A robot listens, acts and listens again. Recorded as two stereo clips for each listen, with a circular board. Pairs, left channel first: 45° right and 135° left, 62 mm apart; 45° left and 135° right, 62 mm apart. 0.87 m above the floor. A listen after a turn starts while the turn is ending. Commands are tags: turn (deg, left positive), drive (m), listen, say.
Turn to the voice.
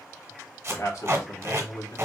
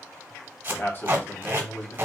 <turn deg="-10"/>
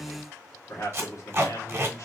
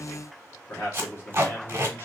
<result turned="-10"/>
<say>Facing the man speaking, 1 to 2 m away.</say>